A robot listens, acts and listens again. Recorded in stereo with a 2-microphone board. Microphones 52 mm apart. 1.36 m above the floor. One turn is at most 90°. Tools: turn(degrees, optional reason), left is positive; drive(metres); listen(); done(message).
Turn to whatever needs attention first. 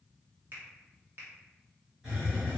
listen()
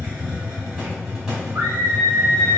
turn(degrees=-90)
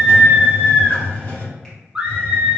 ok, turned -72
turn(degrees=-20, reason="So it is at 20° right.")
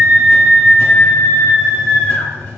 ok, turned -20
done("Facing the scream, under 1 m away.")